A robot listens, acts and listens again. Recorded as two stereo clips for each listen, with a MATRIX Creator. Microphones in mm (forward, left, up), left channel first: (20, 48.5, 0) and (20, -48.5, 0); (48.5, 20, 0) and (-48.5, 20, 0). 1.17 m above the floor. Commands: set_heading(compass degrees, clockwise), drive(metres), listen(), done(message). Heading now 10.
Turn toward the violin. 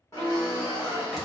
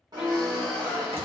set_heading(45)
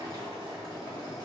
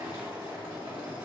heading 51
listen()
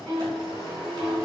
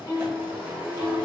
done("Found it: a violin, straight ahead.")